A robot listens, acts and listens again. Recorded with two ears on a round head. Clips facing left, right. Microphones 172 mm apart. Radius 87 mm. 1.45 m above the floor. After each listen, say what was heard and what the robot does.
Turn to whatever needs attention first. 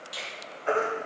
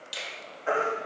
Turn 30° right.
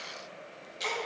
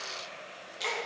Keep listening.
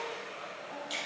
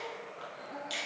Keep listening.
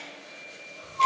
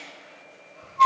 So it is at 145° right. Turn 145° right.
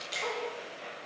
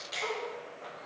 Keep listening.
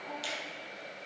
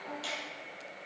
Keep listening.
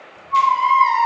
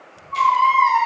Facing the baby crying, 1 to 2 m away.